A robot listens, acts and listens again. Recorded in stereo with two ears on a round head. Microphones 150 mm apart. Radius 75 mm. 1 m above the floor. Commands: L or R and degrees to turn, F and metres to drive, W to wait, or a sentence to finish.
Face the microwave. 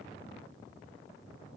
W
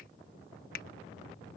W
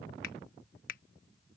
I can't make out a microwave to turn to.